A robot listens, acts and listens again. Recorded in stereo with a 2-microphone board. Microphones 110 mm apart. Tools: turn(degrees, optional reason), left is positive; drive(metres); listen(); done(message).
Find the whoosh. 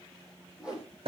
turn(degrees=-30)
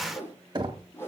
turn(degrees=20, reason="So it is at 20° left.")
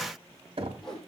done("Found it: a whoosh, straight ahead, over 4 m away.")